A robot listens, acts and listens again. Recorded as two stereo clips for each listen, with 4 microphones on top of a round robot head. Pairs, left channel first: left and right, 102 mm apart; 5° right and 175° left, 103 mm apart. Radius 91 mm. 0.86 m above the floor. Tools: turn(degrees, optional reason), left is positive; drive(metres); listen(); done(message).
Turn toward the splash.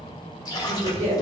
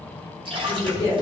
turn(degrees=140, reason="The splash: 140° left.")
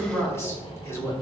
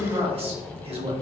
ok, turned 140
done("I heard a splash from this way, but can't make it out now.")